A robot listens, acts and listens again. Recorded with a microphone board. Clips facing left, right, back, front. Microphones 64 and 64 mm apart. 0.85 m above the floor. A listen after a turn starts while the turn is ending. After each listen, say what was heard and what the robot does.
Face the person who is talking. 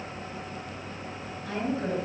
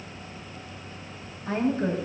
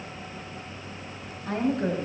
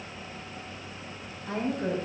The woman speaking: 155° right. Turn 155° right.
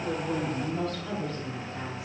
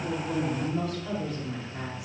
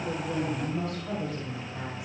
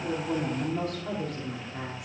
The woman speaking is now 15° right. Turn 15° right.
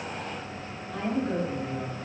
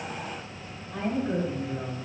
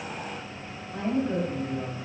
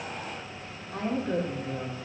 The woman speaking is now 10° right. Turn 10° right.
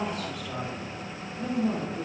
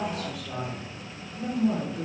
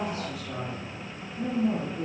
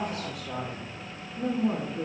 Facing the woman speaking.